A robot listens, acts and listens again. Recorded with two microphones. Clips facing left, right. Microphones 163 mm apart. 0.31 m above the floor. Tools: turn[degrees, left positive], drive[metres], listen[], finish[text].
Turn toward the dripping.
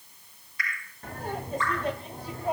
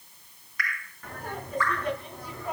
Thought: The dripping: about 25° left or 155° left.
Action: turn[25]
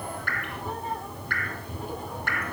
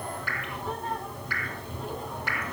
Thought: So it is at 130° left.
Action: turn[130]
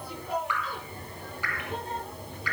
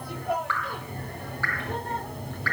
Thought: The dripping is now 15° left.
Action: turn[15]
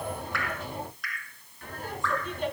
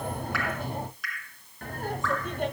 Action: finish[Found it: dripping, straight ahead.]